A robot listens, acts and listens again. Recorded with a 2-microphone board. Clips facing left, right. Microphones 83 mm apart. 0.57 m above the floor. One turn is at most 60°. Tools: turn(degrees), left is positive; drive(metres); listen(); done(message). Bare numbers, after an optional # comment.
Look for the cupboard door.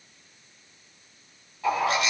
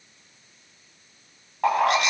listen()
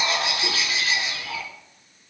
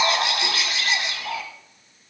listen()
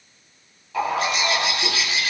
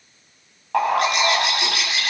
done("I can't make out a cupboard door, only a bird.")